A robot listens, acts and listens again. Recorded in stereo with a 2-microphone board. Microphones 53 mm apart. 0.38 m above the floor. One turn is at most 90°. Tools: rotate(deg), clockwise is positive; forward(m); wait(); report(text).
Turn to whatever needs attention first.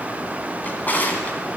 wait()
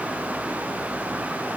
wait()
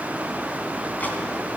report("I can't make out anything urgent to turn to.")